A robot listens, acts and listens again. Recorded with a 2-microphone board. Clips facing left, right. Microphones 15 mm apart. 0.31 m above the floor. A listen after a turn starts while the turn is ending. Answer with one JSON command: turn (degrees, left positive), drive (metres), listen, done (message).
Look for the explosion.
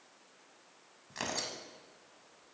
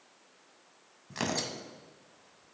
{"listen": true}
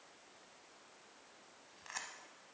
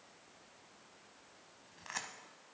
{"listen": true}
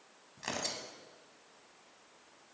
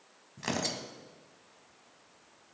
{"done": "I can't make out an explosion to turn to."}